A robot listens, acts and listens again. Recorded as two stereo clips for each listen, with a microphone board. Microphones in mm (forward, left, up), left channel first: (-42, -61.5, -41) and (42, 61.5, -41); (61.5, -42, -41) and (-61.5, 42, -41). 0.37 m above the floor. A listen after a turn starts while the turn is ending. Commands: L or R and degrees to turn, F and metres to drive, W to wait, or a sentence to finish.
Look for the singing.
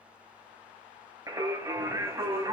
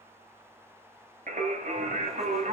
L120
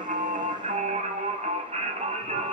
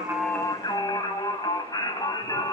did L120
L25
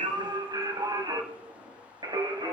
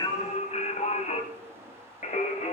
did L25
Facing the singing, 1 to 2 m away.